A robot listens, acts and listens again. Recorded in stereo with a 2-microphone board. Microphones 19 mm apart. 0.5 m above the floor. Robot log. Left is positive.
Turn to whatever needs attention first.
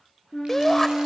note: The shout: about 20° left or 160° left.
cmd yaw +20
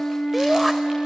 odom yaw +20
end: Found it: a shout, straight ahead, 1 to 2 m away.